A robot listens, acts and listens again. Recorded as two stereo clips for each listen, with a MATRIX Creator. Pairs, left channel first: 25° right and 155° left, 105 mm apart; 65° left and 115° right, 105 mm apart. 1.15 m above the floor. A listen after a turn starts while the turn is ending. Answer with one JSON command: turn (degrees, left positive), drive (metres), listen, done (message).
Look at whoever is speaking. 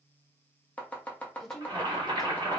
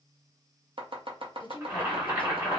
{"turn": 65}
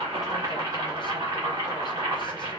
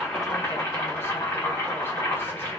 {"listen": true}
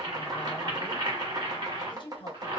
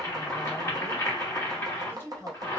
{"done": "Found it: a woman speaking, straight ahead."}